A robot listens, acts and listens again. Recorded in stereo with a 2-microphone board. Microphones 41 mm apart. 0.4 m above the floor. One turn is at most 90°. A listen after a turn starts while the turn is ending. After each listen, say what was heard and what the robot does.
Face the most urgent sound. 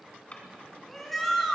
Turn 30° left.
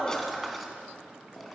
Keep listening.
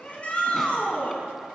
So it is at 145° left. Turn 90° left.
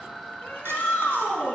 The shout is now 60° left. Turn 60° left.
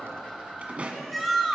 Facing the shout.